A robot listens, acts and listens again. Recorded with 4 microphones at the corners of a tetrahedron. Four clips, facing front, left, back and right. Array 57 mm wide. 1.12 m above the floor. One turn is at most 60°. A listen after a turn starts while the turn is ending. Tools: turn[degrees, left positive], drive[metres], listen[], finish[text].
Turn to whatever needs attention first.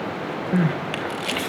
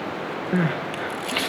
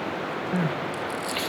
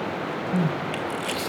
Thought: The crying: 70° left.
Action: turn[60]
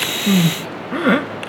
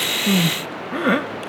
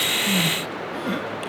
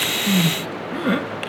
Thought: The crying is now 25° left.
Action: turn[25]
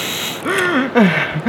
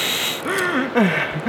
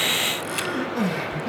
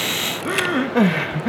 Thought: The crying is now 15° left.
Action: turn[15]
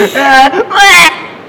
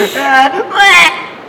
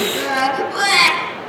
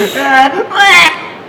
Action: finish[Found it: crying, straight ahead, 1 to 2 m away.]